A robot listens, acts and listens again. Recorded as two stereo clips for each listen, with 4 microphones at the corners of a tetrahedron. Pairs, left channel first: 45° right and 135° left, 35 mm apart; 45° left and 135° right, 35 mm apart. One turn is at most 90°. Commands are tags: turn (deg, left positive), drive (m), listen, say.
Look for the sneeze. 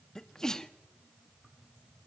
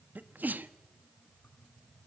<turn deg="-90"/>
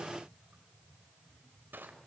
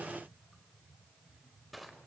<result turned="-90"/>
<turn deg="-25"/>
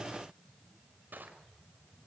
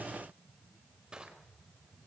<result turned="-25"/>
<say>I heard a sneeze from this way, but can't make it out now.</say>